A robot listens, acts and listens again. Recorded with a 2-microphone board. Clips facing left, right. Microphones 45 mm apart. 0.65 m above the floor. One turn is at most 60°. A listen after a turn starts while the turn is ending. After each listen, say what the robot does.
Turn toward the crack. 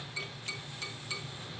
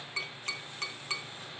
Keep listening.
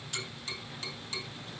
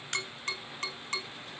Turn 60° right.
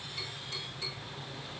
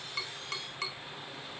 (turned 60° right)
Keep listening.
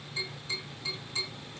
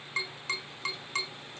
I heard a crack, but can't make it out now. It was about 5° right or 55° right.